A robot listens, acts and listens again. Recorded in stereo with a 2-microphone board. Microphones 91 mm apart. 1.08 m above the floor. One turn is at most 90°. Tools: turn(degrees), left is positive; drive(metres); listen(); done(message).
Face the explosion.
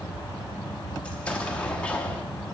turn(degrees=30)
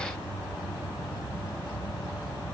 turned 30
listen()
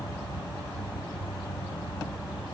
done("I heard an explosion, but can't make it out now. It was about 15° right or 135° left.")